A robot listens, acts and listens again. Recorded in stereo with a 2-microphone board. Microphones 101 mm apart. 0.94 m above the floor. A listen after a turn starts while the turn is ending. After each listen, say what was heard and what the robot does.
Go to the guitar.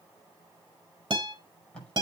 The guitar: about 50° right or 130° right. Turn 50° right.
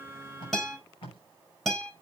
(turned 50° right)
Drive 1.0 m forward.
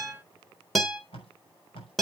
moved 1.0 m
Drive 1.0 m forward.
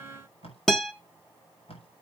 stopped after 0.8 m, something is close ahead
I am next to the guitar.